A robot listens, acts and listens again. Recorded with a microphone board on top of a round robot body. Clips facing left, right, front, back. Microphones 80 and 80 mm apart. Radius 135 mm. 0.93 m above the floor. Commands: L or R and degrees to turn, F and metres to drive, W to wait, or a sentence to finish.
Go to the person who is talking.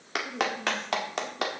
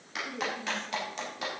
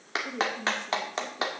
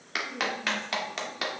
L10
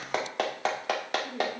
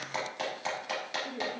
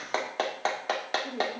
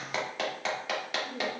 F1.0
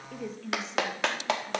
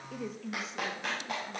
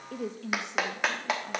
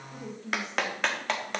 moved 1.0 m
F1.0
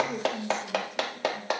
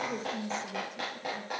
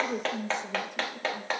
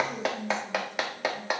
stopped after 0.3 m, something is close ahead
Arrived at the woman speaking, straight ahead.